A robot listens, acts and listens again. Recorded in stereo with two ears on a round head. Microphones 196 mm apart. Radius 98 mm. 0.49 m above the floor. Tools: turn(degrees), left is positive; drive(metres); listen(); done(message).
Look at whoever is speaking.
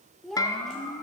turn(degrees=30)
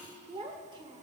turn(degrees=-25)
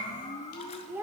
turn(degrees=-10)
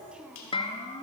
done("Facing the child speaking.")